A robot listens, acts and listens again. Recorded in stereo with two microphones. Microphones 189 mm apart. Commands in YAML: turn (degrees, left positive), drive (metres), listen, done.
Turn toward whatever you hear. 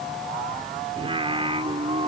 turn: -30
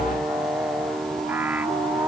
turn: -10
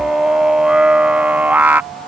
turn: -10
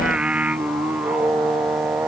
turn: -10
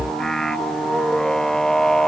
done: "Facing the singing."